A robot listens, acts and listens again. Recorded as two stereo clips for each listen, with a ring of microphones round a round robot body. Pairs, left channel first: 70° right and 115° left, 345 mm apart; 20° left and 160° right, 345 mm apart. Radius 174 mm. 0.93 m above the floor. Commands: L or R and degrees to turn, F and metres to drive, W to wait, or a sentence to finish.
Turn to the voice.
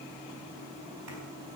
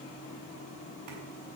W
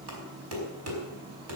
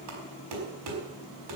W
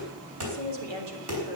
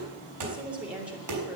L115
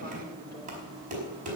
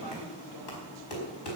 W
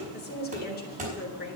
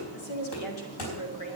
Facing the woman speaking, 2 to 4 m away.